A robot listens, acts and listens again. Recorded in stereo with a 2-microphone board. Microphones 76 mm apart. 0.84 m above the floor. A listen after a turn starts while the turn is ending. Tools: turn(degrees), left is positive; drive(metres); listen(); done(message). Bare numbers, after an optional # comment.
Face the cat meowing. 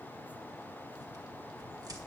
listen()
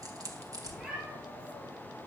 turn(-30)
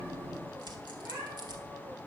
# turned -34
# So it is at 140° right.
turn(-140)
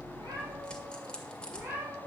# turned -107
# The cat meowing is now 30° right.
turn(-30)
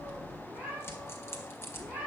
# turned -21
# The cat meowing is now 10° right.
turn(-10)
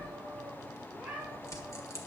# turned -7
done("Found it: a cat meowing, straight ahead.")